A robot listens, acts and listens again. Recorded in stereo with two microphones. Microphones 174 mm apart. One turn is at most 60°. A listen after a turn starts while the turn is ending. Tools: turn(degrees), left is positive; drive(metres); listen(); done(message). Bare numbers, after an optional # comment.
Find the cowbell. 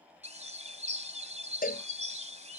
# The cowbell: about 55° left or 125° left.
turn(55)
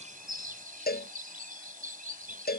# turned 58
# So it is at 65° left.
turn(60)
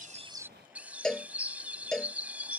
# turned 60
done("Facing the cowbell.")